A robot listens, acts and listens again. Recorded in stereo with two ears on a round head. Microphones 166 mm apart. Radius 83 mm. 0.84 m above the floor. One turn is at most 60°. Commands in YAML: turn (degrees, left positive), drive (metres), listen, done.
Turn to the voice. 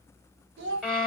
turn: -60
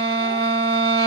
listen: true
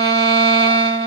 listen: true
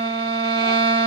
done: "I heard a child speaking, but can't make it out now. It was about straight ahead or 60° right."